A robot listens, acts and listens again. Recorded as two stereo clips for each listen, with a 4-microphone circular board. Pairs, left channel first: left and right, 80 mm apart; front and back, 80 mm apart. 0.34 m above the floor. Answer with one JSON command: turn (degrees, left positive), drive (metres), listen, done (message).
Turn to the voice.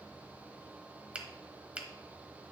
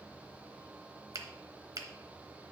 {"listen": true}
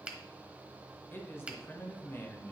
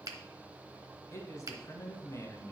{"turn": 35}
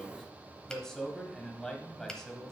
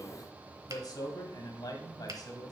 {"turn": 10}
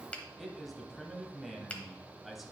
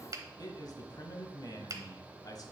{"done": "Found it: a man speaking, straight ahead."}